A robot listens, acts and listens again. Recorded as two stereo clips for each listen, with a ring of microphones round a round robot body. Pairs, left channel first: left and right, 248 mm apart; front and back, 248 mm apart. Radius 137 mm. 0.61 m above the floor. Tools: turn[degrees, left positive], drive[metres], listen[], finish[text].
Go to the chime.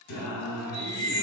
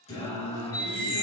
Thought: The chime: 50° right.
Action: turn[-50]
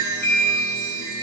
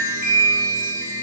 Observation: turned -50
Action: drive[1.0]
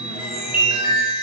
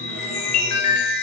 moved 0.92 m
Thought: The chime is now 15° right.
Action: turn[-15]
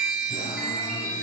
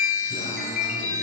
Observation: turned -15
Action: drive[1.0]
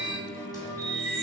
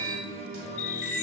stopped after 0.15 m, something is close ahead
Action: finish[Arrived at the chime, straight ahead.]